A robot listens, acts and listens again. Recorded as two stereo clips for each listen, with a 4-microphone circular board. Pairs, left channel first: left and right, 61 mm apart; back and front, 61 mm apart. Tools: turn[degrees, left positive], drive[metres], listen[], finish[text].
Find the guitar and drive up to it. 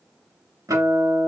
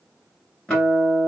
Thought: The guitar: 105° right.
Action: turn[-105]
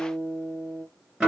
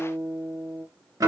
Thought: The guitar is now 10° right.
Action: turn[-10]
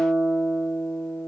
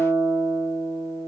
Action: drive[1.0]
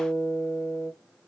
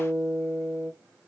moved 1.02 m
Action: drive[1.0]
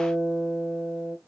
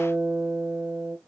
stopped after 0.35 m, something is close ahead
Action: finish[Arrived at the guitar, straight ahead.]